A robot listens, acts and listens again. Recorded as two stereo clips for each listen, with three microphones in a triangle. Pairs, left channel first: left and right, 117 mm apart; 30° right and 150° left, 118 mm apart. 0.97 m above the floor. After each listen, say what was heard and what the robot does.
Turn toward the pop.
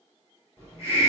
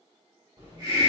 Keep listening.
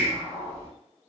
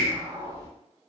Keep listening.
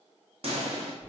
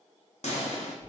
The pop: 55° right. Turn 55° right.
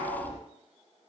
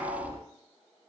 Facing where the pop came from. I can't hear it now.